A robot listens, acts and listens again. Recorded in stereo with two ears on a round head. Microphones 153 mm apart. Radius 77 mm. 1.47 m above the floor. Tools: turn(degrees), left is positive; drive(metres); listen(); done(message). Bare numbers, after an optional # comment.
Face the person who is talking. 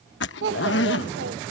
# The child speaking: about 75° right or 105° right.
turn(-75)
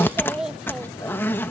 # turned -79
done("Found it: a child speaking, straight ahead.")